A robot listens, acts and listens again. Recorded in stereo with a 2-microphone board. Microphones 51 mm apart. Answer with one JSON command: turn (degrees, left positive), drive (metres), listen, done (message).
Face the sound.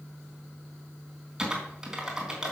{"turn": -30}
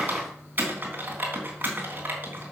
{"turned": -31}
{"turn": -140}
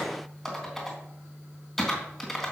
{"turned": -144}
{"done": "Facing the typing on a keyboard, 2 to 4 m away."}